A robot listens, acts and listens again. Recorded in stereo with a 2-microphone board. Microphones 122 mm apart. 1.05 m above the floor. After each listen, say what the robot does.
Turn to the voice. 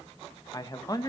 Turn 30° left.
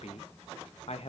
Turn 120° left.
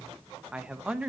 Turn 10° right.
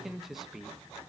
Found it: a man speaking, straight ahead.